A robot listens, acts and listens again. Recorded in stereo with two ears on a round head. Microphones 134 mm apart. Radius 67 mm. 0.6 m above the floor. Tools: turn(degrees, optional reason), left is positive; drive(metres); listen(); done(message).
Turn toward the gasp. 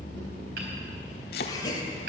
turn(degrees=25, reason="The gasp: about 25° left or 155° left.")
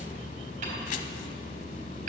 listen()
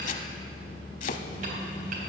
done("I heard a gasp, but can't make it out now. It was about straight ahead or 130° left.")